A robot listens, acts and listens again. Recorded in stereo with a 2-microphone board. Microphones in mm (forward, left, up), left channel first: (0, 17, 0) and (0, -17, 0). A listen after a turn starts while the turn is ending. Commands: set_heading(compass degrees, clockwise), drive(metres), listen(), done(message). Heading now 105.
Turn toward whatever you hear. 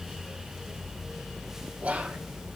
set_heading(145)
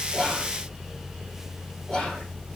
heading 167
set_heading(147)
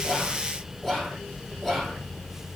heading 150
done("Found it: whispering, straight ahead.")